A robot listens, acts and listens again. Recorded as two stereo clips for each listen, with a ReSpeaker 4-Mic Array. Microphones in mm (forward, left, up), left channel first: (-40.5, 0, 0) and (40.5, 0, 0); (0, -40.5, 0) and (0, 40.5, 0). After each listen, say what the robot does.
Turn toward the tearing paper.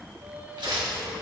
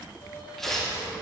Found it: tearing paper, straight ahead, 1 to 2 m away.